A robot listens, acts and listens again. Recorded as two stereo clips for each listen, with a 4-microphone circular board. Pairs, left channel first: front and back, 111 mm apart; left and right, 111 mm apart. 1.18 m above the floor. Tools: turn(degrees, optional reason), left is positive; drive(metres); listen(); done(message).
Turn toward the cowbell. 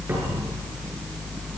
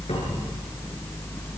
listen()
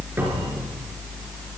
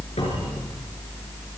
listen()
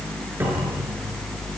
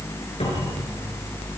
done("I can't make out a cowbell.")